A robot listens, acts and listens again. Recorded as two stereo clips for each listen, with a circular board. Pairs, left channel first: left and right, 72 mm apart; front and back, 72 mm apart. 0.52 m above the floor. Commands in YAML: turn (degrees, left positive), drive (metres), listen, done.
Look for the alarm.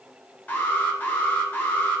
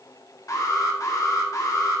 turn: 25
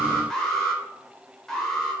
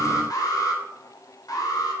done: "Facing the alarm, 1 to 2 m away."